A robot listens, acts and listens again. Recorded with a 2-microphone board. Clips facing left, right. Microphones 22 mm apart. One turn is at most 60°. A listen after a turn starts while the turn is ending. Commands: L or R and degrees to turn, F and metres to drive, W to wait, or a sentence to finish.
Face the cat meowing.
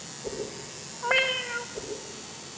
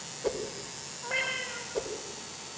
L40
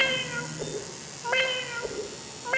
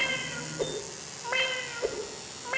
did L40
Facing the cat meowing.